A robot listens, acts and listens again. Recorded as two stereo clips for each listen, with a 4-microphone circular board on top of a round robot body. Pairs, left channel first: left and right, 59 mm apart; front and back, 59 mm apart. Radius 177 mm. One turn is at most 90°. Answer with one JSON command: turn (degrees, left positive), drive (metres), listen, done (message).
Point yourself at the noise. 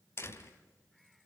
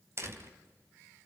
{"turn": 90}
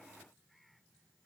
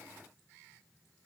{"turn": 45}
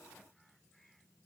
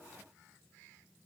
{"done": "I heard a door slam from this way, but can't make it out now."}